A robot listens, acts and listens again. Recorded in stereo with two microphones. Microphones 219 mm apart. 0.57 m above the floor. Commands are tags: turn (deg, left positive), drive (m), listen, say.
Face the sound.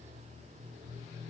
<listen/>
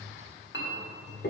<turn deg="60"/>
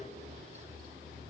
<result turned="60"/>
<listen/>
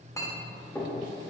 <turn deg="15"/>
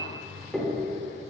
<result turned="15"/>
<say>Facing the clink.</say>